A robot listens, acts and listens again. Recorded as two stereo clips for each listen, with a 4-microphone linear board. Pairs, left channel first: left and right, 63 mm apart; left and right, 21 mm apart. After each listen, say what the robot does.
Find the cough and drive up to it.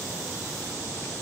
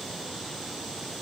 Keep listening.
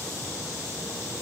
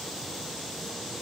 Keep listening.
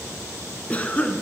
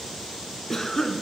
Turn 20° left.
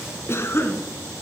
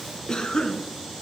Turn 135° left.
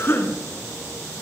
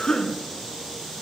Turn 40° left.
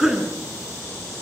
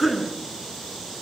Turn 10° right.
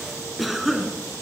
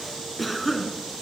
Drive 1.0 m forward.
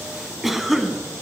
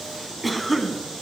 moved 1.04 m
Drive 1.0 m forward.
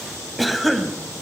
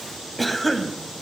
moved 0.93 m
Drive 1.0 m forward.
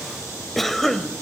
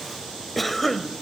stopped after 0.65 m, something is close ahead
I am next to the cough.